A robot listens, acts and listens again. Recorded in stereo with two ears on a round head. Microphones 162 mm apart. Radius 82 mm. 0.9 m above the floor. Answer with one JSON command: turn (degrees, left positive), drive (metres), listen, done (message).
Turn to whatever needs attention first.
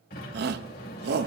{"turn": -60}
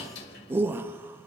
{"turn": -15}
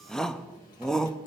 {"done": "Found it: a shout, straight ahead, under 1 m away."}